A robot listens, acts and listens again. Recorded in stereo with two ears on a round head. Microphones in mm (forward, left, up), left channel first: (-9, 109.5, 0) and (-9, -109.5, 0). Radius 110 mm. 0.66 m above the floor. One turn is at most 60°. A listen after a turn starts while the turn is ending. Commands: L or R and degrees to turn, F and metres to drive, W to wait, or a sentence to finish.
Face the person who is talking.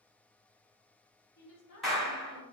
L60
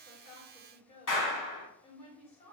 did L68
L25
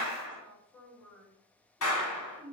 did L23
Found it: a woman speaking, straight ahead, 1 to 2 m away.